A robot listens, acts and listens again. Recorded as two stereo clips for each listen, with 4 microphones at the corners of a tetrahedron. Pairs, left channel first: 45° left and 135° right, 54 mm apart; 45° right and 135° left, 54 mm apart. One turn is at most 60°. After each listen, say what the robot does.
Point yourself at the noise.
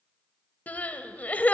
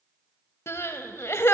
Turn 15° right.
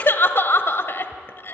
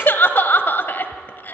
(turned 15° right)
Found it: crying, straight ahead, 1 to 2 m away.